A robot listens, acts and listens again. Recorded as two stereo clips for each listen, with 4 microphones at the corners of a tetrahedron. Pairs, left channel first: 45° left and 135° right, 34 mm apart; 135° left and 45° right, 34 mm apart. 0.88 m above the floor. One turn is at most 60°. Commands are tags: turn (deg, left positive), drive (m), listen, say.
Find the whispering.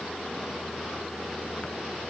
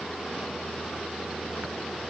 <listen/>
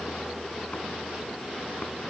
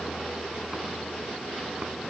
<listen/>
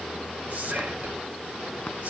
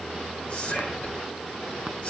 <turn deg="60"/>
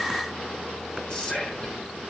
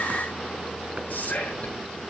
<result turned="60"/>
<turn deg="60"/>
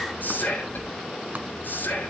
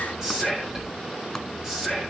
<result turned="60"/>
<turn deg="25"/>
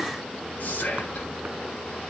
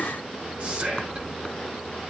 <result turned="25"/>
<say>Facing the whispering, over 4 m away.</say>